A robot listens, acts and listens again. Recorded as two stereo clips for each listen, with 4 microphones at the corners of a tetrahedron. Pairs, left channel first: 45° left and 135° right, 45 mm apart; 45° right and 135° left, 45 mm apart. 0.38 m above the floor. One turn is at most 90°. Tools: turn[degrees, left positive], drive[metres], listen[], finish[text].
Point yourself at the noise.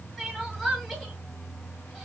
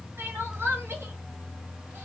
Thought: The crying: 130° left.
Action: turn[90]
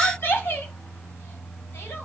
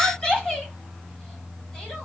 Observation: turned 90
Thought: The crying is now 25° left.
Action: turn[25]
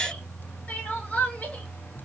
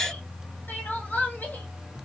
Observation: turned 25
Thought: The crying is now 15° right.
Action: turn[-15]
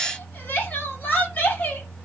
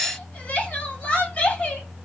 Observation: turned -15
Action: finish[Found it: crying, straight ahead.]